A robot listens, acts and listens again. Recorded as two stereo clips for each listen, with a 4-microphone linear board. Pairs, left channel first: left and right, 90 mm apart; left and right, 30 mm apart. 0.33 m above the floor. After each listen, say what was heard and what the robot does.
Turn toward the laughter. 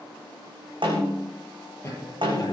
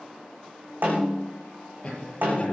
The laughter: about 35° left or 145° left. Turn 35° left.
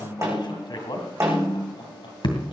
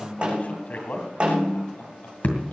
Keep listening.
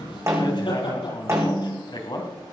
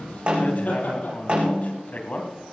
So it is at 110° left. Turn 110° left.
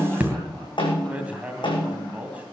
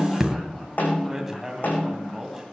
Keep listening.
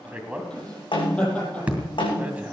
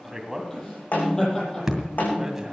The laughter is now 15° left. Turn 15° left.
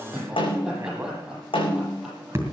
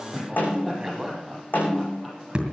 Facing the laughter.